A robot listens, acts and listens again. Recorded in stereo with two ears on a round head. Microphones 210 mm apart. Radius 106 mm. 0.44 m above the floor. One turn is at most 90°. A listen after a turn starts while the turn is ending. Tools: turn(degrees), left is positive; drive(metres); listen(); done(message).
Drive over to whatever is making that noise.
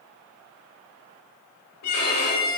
turn(degrees=90)
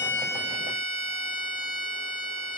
turn(degrees=-15)
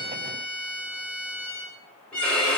drive(metres=1.0)
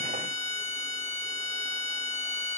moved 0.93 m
drive(metres=1.0)
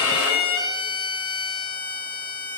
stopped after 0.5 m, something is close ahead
turn(degrees=20)
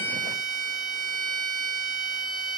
done("I am next to the violin.")